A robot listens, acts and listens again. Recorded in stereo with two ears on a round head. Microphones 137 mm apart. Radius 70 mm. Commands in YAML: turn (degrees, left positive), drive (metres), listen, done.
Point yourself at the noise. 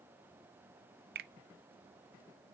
turn: -70
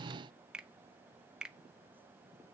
done: "Found it: a finger snap, straight ahead, under 1 m away."